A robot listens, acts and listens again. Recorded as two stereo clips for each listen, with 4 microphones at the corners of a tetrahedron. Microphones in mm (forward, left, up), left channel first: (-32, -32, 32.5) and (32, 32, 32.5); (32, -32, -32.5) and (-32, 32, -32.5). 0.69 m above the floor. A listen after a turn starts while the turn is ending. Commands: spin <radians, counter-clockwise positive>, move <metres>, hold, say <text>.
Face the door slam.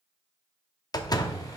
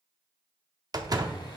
spin 3.14
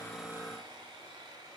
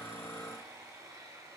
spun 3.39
spin -0.26
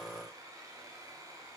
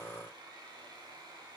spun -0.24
say Facing where the door slam came from. I can't hear it now.